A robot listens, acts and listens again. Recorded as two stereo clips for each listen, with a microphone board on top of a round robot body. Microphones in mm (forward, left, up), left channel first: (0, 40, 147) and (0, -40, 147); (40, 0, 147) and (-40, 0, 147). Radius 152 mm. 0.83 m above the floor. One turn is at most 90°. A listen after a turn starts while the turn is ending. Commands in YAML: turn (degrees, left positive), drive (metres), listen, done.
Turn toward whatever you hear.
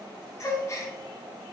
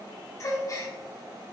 turn: 40
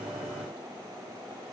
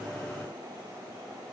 done: "Facing where the gasp came from. I can't hear it now."